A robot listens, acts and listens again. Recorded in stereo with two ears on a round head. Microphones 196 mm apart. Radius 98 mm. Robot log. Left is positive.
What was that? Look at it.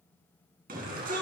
note: The shout: about 40° right or 140° right.
cmd yaw -40
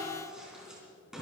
end: Facing the shout.